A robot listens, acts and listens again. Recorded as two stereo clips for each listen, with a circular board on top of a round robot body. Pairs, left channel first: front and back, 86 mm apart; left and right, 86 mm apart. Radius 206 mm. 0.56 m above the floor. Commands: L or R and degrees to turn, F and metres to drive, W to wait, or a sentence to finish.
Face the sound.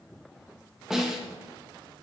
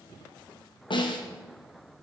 L95
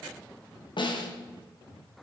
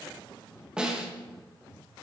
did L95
R10
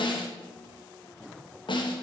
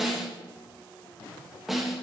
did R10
Facing the snare drum.